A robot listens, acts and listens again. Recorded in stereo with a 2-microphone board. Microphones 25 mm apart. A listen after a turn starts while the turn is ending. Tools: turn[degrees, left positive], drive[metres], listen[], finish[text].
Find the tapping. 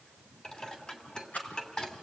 Action: listen[]
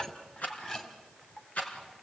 Action: listen[]
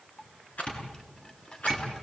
Thought: The tapping: about 65° left or 115° left.
Action: turn[65]
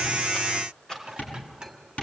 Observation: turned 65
Thought: So it is at 50° left.
Action: turn[50]
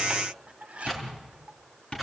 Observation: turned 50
Thought: The tapping is now 30° left.
Action: turn[30]
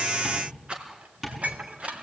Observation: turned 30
Thought: The tapping is now 15° right.
Action: turn[-15]
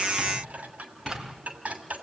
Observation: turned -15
Action: listen[]
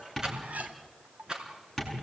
Action: finish[Found it: tapping, straight ahead, over 4 m away.]